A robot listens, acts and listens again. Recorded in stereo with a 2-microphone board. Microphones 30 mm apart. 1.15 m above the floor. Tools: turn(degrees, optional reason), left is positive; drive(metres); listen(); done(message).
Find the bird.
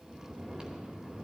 listen()
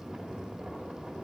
listen()
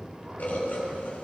turn(degrees=60, reason="The bird: about 60° left or 120° left.")
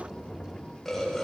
done("Found it: a bird, straight ahead.")